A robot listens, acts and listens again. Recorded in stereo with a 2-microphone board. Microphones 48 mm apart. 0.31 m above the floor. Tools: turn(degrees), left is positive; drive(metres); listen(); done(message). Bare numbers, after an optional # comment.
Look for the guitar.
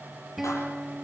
turn(-30)
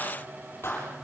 listen()
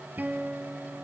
# So it is at 140° right.
turn(-140)
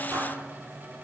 listen()
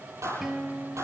# The guitar is now 10° right.
turn(-10)
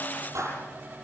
listen()
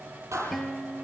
done("Found it: a guitar, straight ahead.")